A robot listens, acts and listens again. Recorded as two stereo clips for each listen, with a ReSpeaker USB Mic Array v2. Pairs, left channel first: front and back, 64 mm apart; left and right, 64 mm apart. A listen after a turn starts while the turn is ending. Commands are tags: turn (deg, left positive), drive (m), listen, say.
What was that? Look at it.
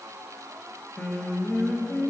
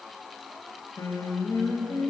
<turn deg="70"/>
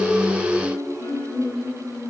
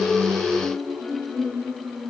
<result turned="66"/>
<turn deg="10"/>
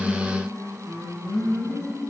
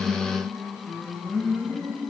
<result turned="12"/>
<say>Found it: singing, straight ahead.</say>